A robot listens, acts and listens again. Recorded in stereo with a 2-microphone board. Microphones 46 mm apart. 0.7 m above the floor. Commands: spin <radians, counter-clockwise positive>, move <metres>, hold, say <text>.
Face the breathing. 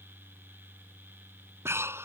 spin -1.22
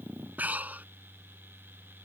spin -0.70
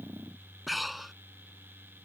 say Found it: breathing, straight ahead.